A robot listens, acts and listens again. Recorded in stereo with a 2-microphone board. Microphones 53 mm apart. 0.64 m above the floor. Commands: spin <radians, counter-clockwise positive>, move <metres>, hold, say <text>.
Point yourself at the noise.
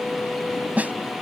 spin -0.52
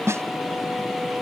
spin -2.01
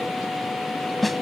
say Facing the snare drum.